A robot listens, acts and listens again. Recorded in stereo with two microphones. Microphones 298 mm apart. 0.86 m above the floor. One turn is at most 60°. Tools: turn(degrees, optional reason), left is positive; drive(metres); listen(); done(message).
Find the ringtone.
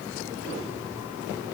listen()
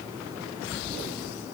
listen()
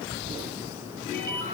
turn(degrees=30)
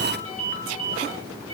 turn(degrees=-20, reason="So it is at 20° right.")
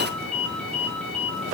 done("Found it: a ringtone, straight ahead, over 4 m away.")